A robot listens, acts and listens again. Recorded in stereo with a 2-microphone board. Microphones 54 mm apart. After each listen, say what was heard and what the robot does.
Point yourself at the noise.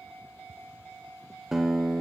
Turn 30° right.
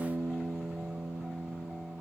So it is at 140° right. Turn 140° right.
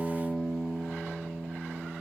The guitar is now 20° left. Turn 20° left.
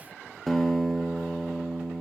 Found it: a guitar, straight ahead, 1 to 2 m away.